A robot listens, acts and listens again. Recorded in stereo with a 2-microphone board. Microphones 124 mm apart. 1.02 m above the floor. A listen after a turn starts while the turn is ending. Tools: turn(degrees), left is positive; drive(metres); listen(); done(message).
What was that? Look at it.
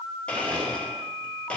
turn(degrees=30)
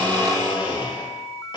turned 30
turn(degrees=145)
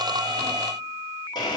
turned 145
turn(degrees=35)
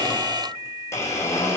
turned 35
turn(degrees=25)
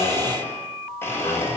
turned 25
turn(degrees=20)
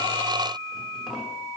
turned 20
listen()
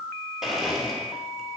done("Facing the blender.")